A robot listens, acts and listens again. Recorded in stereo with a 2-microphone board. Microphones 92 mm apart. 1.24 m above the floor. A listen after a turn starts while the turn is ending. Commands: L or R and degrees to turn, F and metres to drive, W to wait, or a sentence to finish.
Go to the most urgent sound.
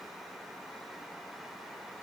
W
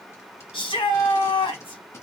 L70
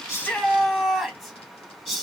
F1.0
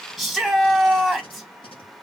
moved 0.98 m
F1.0
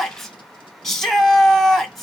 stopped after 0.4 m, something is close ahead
Arrived at the shout, straight ahead.